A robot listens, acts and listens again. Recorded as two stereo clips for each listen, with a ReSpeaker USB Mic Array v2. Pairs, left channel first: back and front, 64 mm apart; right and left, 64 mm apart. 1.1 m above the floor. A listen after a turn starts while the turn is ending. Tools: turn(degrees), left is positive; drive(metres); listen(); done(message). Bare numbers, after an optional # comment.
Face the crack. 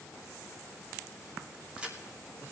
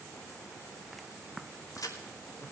# The crack: 70° right.
turn(-70)
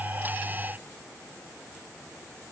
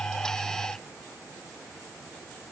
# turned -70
done("Facing where the crack came from. I can't hear it now.")